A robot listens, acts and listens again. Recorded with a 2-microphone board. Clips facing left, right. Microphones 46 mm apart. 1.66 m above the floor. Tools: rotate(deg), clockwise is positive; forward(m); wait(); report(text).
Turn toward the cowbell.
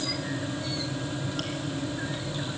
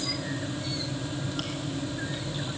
wait()
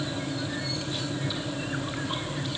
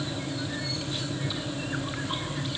wait()
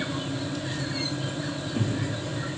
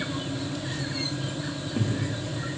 report("I can't make out a cowbell, only chewing.")